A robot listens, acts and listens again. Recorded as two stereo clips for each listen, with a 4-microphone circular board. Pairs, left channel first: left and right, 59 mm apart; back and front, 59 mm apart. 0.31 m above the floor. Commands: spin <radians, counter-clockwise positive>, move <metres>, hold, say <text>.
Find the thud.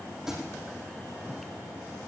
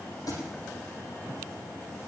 spin -3.05
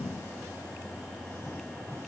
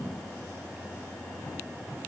say I heard a thud from this way, but can't make it out now.